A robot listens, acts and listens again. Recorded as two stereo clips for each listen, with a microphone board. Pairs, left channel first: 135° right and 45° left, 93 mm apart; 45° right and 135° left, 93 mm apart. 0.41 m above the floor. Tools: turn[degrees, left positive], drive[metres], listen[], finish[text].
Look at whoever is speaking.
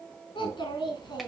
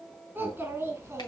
Thought: The child speaking: 170° right.
Action: turn[-170]
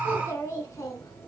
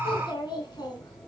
Thought: The child speaking is now 80° right.
Action: turn[-80]
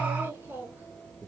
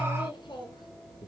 Thought: The child speaking is now 25° right.
Action: turn[-25]
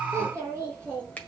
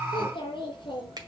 Thought: The child speaking is now 20° right.
Action: turn[-20]
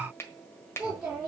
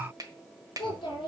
Thought: The child speaking is now 10° right.
Action: turn[-10]
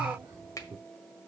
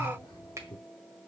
Action: finish[Facing the child speaking, 2 to 4 m away.]